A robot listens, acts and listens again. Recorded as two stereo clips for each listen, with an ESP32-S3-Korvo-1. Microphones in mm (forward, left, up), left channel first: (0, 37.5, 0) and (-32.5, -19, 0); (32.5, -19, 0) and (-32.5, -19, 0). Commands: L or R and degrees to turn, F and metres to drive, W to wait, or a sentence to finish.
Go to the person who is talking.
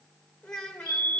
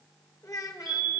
R15
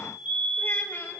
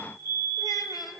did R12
W
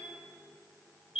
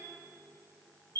W
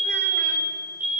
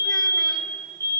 Facing where the child speaking came from. I can't hear it now. I did not reach it.